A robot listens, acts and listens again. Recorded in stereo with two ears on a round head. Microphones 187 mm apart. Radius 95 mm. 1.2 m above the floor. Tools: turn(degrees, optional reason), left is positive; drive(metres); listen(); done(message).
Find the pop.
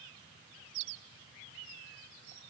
listen()
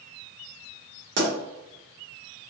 turn(degrees=-65, reason="The pop: about 65° right or 115° right.")
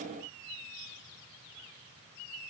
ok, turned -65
listen()
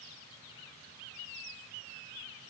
done("I heard a pop, but can't make it out now. It was about straight ahead or 50° right.")